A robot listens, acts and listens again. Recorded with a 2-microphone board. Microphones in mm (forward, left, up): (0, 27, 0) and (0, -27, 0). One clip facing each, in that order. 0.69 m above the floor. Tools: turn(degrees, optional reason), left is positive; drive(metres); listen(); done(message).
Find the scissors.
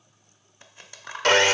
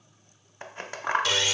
turn(degrees=-50, reason="The scissors: about 50° right or 130° right.")
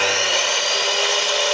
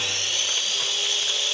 listen()
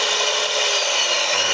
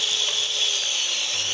listen()
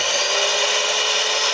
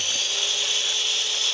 done("I heard scissors, but can't make it out now. It was about straight ahead or 80° right.")